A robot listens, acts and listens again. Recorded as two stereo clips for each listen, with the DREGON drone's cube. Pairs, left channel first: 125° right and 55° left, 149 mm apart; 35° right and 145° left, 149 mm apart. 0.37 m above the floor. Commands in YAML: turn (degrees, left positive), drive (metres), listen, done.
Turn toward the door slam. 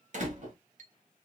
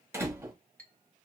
turn: 75
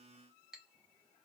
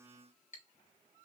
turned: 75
done: "Facing where the door slam came from. I can't hear it now."